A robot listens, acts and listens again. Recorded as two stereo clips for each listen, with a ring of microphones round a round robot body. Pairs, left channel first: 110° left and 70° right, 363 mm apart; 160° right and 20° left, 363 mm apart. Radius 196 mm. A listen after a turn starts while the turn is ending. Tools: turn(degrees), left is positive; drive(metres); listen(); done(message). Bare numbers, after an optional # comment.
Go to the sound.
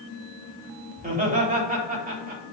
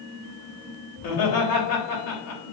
# The laughter: 135° right.
turn(-135)
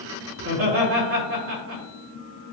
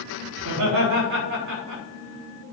# The laughter is now 15° right.
turn(-15)
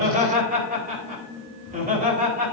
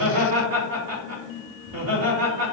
drive(1.0)
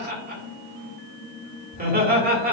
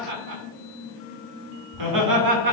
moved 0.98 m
drive(1.0)
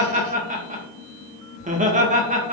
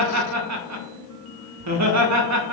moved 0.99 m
drive(1.0)
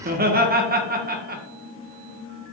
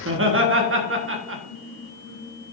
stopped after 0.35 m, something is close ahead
# The laughter is now 15° right.
turn(-15)
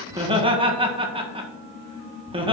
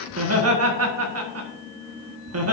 done("I am next to the laughter.")